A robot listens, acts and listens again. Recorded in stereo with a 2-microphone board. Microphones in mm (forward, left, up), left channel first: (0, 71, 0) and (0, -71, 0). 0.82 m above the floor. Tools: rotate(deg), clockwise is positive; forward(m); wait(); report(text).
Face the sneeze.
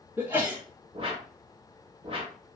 rotate(30)
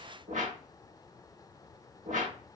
wait()
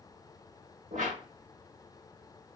report("I heard a sneeze, but can't make it out now. It was about 15° left or 135° right.")